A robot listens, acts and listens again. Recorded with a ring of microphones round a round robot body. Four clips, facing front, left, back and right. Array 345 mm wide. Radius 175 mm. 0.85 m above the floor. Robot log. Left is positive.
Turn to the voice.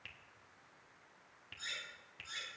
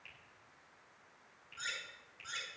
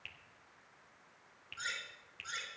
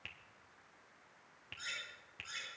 cmd idle
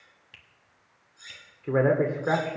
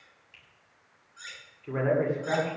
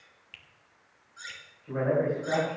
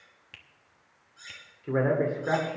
note: The man speaking: 15° right.
cmd yaw -15
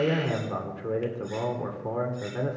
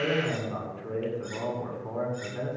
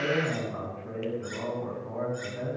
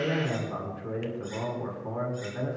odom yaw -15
end: Facing the man speaking, 2 to 4 m away.